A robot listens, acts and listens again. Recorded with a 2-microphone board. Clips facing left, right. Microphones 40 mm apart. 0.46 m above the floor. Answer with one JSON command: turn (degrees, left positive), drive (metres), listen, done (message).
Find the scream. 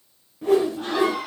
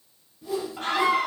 {"turn": -65}
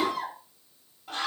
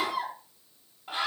{"turn": -25}
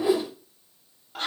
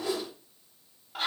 {"done": "Found it: a scream, straight ahead."}